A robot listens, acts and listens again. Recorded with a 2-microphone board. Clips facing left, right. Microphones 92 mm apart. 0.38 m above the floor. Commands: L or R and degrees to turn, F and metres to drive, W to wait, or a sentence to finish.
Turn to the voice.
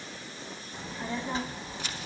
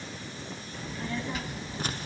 L35
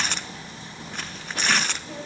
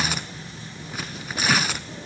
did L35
L105
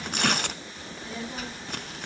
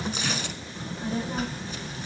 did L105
R40
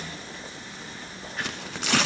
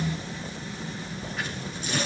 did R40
Facing the child speaking, 2 to 4 m away.